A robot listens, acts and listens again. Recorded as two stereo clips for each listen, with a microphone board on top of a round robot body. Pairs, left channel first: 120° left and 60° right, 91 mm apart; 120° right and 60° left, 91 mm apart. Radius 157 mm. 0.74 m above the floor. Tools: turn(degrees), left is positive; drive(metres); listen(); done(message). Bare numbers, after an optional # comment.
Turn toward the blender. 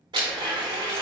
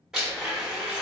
# The blender: 25° right.
turn(-25)
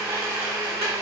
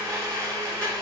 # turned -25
done("Found it: a blender, straight ahead.")